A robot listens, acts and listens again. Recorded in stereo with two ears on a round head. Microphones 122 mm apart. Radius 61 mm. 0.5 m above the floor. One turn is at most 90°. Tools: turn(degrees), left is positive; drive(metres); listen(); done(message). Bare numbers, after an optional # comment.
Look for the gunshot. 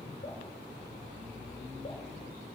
listen()
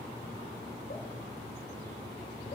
listen()
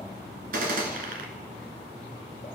# The gunshot: about 70° right or 110° right.
turn(-70)
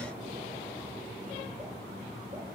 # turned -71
listen()
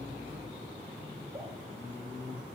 done("I heard a gunshot, but can't make it out now. It was about 5° left or 40° right.")